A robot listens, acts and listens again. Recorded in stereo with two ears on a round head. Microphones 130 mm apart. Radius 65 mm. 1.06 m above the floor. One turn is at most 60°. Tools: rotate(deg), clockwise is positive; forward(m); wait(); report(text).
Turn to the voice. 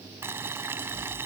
wait()
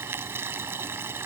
wait()
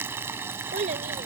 rotate(55)
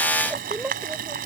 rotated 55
report("Found it: a child speaking, straight ahead.")